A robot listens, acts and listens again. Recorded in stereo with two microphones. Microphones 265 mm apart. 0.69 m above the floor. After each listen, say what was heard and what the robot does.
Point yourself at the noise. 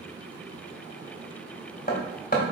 The hammering: about 35° left or 145° left. Turn 35° left.
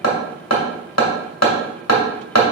So it is at 110° left. Turn 110° left.
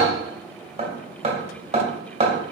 The hammering is now 25° right. Turn 25° right.
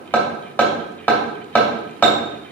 The hammering is now 10° left. Turn 10° left.
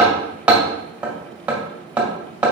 Facing the hammering.